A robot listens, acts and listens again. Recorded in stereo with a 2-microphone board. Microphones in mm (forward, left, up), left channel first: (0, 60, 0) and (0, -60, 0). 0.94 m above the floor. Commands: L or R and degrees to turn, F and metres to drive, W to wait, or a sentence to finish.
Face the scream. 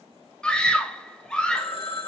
L30
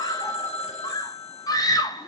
L140
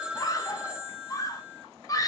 L35
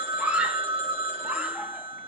R10
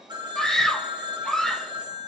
Found it: a scream, straight ahead, under 1 m away.